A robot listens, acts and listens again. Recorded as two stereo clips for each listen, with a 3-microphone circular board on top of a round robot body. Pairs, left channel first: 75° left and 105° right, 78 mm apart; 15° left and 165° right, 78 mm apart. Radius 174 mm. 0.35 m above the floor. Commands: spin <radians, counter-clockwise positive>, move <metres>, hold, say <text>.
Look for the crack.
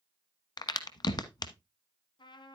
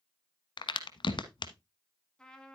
spin 0.70
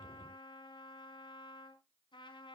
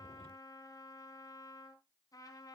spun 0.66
say I heard a crack from this way, but can't make it out now.